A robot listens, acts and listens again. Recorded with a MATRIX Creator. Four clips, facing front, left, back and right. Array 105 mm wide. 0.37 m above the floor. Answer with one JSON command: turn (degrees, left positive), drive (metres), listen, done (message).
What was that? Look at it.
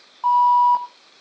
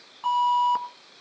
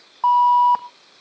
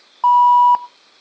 {"turn": -115}
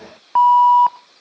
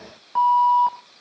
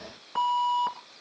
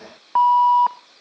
{"turn": -35}
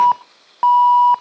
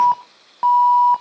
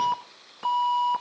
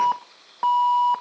{"done": "Found it: an alarm, straight ahead, 1 to 2 m away."}